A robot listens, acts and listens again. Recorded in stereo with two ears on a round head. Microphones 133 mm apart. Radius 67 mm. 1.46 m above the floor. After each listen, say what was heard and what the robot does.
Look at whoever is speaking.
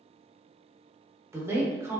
The woman speaking: about 20° right or 160° right. Turn 20° right.
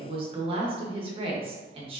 So it is at 140° right. Turn 140° right.
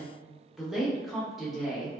Facing the woman speaking.